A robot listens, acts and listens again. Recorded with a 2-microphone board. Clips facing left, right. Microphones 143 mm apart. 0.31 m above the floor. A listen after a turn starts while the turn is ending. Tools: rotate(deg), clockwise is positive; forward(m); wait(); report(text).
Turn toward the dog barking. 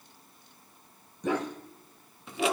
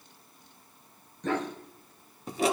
rotate(-30)
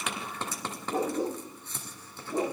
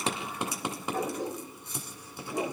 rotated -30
rotate(-150)
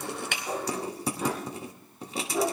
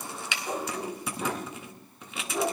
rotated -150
report("Found it: a dog barking, straight ahead, over 4 m away.")